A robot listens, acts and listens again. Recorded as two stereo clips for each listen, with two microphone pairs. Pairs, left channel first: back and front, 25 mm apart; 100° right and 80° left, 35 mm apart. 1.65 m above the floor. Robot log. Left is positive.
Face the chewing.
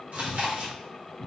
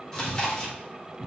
note: The chewing: 30° right.
cmd yaw -30
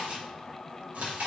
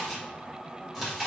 end: Found it: chewing, straight ahead, 1 to 2 m away.